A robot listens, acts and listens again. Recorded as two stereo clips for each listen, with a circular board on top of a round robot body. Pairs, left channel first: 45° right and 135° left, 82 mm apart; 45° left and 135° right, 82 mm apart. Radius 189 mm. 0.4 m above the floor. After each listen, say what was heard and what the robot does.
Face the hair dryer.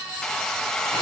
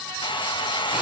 The hair dryer: 40° left. Turn 40° left.
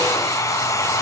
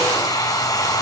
Found it: a hair dryer, straight ahead.